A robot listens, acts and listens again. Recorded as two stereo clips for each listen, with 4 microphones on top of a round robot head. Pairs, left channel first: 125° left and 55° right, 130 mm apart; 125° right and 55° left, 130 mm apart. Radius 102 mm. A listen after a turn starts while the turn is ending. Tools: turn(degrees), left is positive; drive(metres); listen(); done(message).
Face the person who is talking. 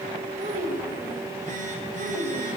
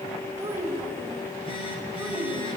turn(degrees=-25)
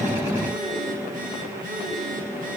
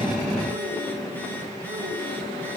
listen()
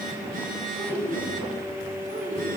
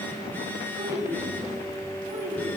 turn(degrees=-25)
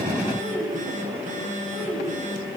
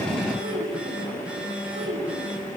done("Facing the child speaking, over 4 m away.")